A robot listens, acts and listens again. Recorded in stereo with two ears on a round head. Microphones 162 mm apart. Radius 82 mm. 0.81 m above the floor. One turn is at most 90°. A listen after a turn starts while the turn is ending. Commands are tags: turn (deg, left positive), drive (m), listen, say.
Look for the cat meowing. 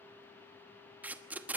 <listen/>
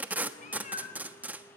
<turn deg="45"/>
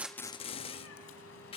<turn deg="90"/>
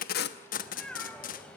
<say>Found it: a cat meowing, straight ahead.</say>